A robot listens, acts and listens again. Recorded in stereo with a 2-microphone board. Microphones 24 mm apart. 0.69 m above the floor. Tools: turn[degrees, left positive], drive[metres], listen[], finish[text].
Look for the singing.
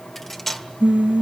Thought: The singing: about 60° right or 120° right.
Action: turn[-60]
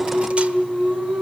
Thought: So it is at 60° right.
Action: turn[-60]
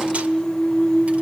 Thought: The singing is now 15° left.
Action: turn[15]
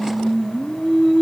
Action: finish[Facing the singing, over 4 m away.]